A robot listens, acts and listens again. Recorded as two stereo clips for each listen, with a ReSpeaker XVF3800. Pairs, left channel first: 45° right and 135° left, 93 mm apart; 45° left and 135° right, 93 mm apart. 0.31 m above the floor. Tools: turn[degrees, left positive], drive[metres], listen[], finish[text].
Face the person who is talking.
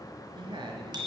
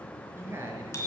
Thought: The woman speaking: 165° left.
Action: turn[165]
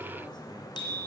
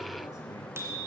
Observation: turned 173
Thought: Nothing new. It was at 10° right.
Action: turn[-10]
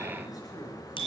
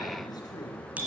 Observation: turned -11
Action: finish[Found it: a woman speaking, straight ahead, 2 to 4 m away.]